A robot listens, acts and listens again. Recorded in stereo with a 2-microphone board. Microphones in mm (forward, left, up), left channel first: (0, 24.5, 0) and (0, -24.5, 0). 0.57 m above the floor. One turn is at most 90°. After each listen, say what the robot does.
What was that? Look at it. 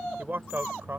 Turn 50° right.
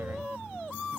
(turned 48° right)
Keep listening.
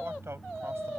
Keep listening.
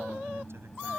I heard a man speaking, but can't make it out now. It was about 5° right or 80° right.